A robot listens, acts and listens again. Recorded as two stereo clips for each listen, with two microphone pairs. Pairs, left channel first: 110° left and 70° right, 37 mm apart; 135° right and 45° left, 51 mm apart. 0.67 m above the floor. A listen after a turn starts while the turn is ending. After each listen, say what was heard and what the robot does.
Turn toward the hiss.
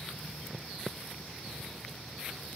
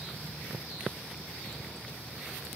Keep listening.
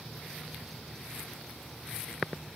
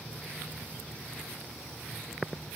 Keep listening.
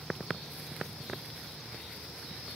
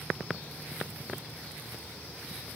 I can't make out a hiss to turn to.